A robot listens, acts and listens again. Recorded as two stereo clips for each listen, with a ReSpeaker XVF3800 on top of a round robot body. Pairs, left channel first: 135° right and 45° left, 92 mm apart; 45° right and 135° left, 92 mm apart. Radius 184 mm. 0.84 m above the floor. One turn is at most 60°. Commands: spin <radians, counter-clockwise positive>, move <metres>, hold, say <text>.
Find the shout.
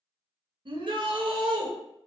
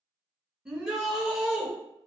spin 0.87
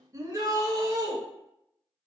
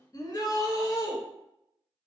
say Found it: a shout, straight ahead.